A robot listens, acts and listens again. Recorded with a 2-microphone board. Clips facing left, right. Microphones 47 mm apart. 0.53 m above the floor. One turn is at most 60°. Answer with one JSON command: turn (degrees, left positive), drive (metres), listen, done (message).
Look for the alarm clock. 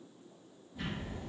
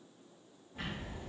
{"listen": true}
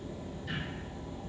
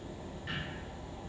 {"listen": true}
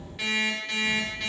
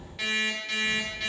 {"turn": 30}
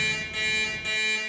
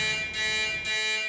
{"turn": 60}
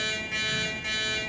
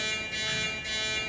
{"turn": 60}
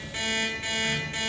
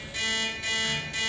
{"turn": 40}
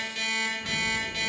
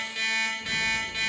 {"done": "Found it: an alarm clock, straight ahead."}